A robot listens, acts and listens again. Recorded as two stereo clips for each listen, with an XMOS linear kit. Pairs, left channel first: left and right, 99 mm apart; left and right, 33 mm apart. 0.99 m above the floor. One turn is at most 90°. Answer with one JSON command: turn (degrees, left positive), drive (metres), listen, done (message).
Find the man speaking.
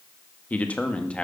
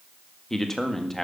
{"turn": 30}
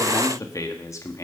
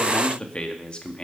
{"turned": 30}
{"turn": 90}
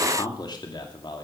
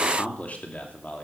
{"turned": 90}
{"turn": 50}
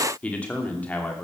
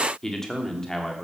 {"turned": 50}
{"turn": 15}
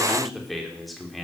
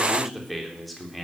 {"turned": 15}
{"done": "Found it: a man speaking, straight ahead."}